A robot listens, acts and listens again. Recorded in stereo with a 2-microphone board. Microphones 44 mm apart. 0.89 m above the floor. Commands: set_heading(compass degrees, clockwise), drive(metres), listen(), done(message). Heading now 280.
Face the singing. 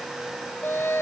set_heading(220)
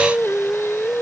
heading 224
set_heading(159)
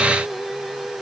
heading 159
done("Found it: singing, straight ahead.")